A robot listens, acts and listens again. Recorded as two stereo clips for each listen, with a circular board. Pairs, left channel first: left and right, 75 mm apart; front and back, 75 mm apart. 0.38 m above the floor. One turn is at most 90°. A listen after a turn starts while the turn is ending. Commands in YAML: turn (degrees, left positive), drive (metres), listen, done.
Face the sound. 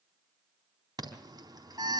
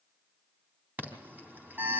turn: -90
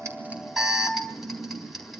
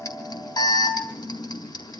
done: "Facing the alarm."